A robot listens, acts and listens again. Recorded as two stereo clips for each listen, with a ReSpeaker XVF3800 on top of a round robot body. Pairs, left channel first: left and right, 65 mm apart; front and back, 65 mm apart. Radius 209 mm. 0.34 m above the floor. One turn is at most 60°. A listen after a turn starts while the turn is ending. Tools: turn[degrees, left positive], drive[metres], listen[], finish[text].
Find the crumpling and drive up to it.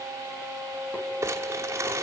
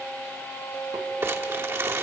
Action: listen[]
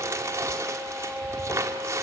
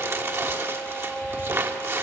Thought: The crumpling: 135° right.
Action: turn[-60]
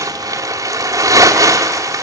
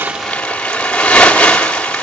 Thought: The crumpling is now 75° right.
Action: turn[-60]
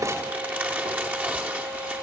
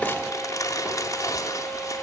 Thought: Nothing new. It was at 15° right.
Action: turn[-15]
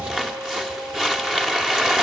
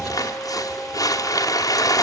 Thought: The crumpling is now 10° right.
Action: turn[-10]
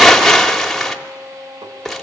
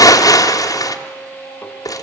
Action: drive[1.0]
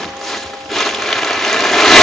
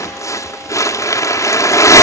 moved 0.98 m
Action: drive[1.0]
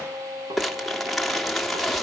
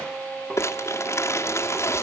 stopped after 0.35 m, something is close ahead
Action: listen[]
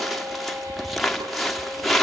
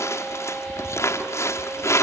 Action: finish[Arrived at the crumpling, straight ahead.]